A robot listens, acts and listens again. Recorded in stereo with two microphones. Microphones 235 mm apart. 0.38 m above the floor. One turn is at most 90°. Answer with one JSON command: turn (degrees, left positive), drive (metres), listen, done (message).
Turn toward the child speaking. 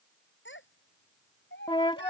{"turn": 50}
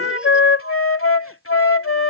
{"listen": true}
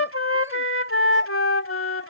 {"listen": true}
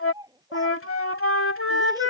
{"turn": -15}
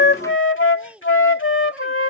{"done": "Found it: a child speaking, straight ahead."}